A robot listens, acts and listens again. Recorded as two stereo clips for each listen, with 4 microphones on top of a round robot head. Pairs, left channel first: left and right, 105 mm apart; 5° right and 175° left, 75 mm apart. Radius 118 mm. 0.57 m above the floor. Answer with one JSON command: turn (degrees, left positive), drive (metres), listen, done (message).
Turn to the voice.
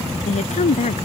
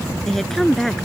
{"turn": 80}
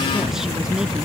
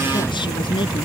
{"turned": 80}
{"listen": true}
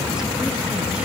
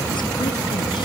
{"listen": true}
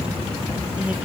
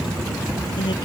{"done": "I heard a woman speaking from this way, but can't make it out now."}